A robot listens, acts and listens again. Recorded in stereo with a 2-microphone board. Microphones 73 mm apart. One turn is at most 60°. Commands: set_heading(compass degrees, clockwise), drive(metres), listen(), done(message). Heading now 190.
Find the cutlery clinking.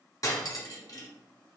set_heading(140)
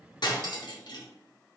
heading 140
set_heading(80)
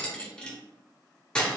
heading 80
set_heading(65)
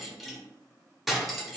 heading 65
done("Found it: cutlery clinking, straight ahead.")